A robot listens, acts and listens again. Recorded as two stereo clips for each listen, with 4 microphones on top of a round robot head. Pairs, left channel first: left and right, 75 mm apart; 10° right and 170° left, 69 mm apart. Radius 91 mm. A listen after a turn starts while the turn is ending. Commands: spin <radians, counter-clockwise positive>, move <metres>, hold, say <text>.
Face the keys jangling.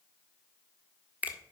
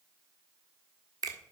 hold
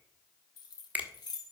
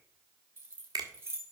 spin 2.09
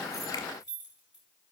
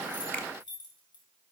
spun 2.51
spin -0.17
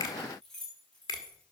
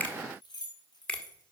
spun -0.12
spin 0.17
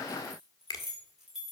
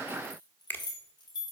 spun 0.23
say Found it: keys jangling, straight ahead.